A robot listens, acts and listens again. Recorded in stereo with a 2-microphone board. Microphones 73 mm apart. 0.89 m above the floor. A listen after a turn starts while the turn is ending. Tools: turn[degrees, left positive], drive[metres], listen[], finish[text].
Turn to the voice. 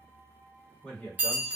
Action: turn[30]
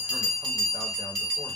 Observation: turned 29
Action: listen[]
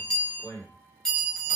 Thought: So it is at 135° left.
Action: turn[135]
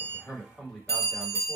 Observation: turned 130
Action: finish[Found it: a man speaking, straight ahead.]